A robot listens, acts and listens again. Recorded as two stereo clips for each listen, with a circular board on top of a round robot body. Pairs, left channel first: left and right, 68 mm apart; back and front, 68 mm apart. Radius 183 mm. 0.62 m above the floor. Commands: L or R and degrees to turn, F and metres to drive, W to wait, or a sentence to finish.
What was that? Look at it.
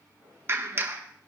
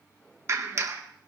R40
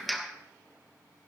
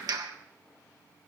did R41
Facing the clap, 1 to 2 m away.